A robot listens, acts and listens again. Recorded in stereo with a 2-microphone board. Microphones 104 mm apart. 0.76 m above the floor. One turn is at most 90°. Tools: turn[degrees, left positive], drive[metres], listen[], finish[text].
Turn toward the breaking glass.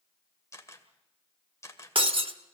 Thought: The breaking glass: about 65° right or 115° right.
Action: turn[-65]
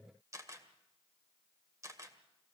Action: listen[]
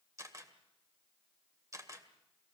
Action: finish[I heard breaking glass, but can't make it out now. It was about straight ahead or 50° right.]